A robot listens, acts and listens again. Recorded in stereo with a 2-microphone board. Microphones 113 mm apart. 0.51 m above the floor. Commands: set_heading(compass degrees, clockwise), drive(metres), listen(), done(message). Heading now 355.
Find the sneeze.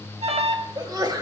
set_heading(30)
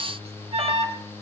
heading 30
listen()
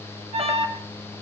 done("I heard a sneeze, but can't make it out now. It was about straight ahead or 110° right.")